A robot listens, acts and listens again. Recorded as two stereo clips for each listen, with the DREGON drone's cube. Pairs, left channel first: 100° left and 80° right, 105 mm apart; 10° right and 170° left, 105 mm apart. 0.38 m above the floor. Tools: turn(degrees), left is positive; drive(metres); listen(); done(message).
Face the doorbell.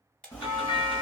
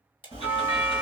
turn(degrees=105)
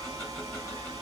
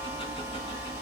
listen()
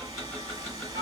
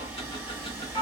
turn(degrees=-35)
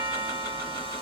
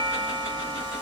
done("Found it: a doorbell, straight ahead.")